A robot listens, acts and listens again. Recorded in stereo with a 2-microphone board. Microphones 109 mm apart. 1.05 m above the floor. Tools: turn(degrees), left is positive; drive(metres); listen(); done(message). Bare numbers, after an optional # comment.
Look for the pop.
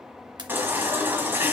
# The pop: about 40° right or 140° right.
turn(-40)
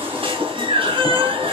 listen()
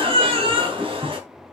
done("I heard a pop, but can't make it out now. It was about straight ahead or 100° right.")